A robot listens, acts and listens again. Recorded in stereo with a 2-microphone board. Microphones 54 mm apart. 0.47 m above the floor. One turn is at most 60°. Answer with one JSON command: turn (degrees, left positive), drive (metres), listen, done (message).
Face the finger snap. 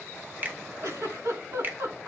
{"turn": -35}
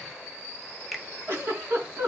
{"done": "Found it: a finger snap, straight ahead."}